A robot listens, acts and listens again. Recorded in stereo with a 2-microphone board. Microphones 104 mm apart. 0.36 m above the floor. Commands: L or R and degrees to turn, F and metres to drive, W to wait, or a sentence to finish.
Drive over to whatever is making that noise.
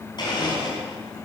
L45
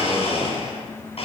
L85
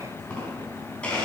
L10
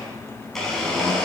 F1.0
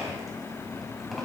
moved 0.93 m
F1.0
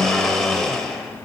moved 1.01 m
F1.0
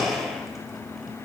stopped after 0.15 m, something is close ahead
I am next to the blender.